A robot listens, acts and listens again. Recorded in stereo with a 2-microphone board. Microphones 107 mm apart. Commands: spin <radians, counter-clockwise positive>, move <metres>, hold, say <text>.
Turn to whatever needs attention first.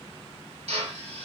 hold
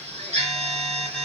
spin 0.52
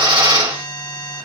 spin 2.36
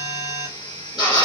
spin 0.87
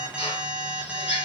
spin -0.17
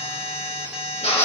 say Found it: an alarm, straight ahead, 2 to 4 m away.